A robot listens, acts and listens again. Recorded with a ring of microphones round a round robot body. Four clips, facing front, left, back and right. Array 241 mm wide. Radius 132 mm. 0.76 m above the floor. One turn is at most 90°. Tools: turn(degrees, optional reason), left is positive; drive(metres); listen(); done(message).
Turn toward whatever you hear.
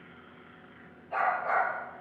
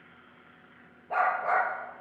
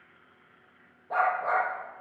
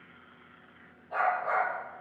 turn(degrees=90, reason="The dog barking: 140° left.")
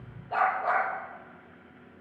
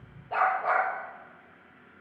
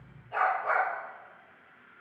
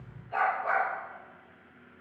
turn(degrees=50, reason="The dog barking is now 50° left.")
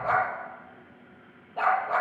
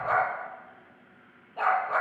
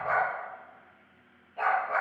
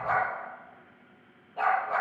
done("Facing the dog barking.")